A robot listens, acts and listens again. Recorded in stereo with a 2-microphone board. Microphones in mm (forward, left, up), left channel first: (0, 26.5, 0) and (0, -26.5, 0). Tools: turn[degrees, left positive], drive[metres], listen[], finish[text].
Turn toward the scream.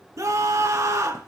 Thought: The scream: about 75° right or 105° right.
Action: turn[-75]
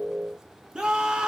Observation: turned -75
Thought: So it is at 15° right.
Action: turn[-15]
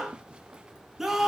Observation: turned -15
Action: finish[Facing the scream.]